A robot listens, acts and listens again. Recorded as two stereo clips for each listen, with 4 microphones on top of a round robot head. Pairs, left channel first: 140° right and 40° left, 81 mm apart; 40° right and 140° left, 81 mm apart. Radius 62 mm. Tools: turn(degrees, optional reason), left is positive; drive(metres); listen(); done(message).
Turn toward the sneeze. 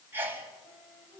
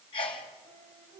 turn(degrees=-25, reason="The sneeze: 25° right.")
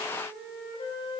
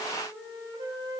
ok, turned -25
done("Facing where the sneeze came from. I can't hear it now.")